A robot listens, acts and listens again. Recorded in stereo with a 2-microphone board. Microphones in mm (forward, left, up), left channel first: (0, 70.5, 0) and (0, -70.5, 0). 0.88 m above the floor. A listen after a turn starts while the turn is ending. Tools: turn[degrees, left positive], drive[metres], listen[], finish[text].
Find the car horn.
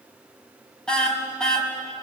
Action: turn[30]
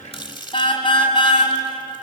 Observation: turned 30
Thought: So it is at 140° left.
Action: turn[140]
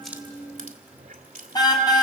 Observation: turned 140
Thought: The car horn is now 30° left.
Action: turn[30]
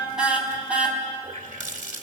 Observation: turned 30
Thought: The car horn is now 10° right.
Action: turn[-10]
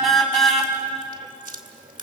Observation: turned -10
Action: finish[Facing the car horn.]